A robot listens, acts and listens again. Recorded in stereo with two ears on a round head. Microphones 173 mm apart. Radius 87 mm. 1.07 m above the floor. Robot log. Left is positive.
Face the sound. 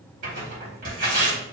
note: The tearing paper: about 45° right or 135° right.
cmd yaw -45
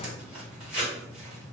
end: Facing the tearing paper, 1 to 2 m away.